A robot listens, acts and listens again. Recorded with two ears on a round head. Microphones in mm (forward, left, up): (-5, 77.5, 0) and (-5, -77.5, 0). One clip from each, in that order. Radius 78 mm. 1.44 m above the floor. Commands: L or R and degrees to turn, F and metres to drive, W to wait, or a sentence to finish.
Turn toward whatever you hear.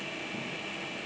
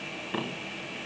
W
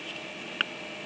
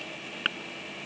W
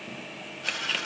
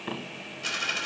R70
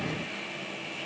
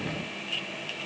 W
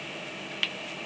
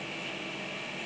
I heard a dropped coin, but can't make it out now. It was about straight ahead or 40° right.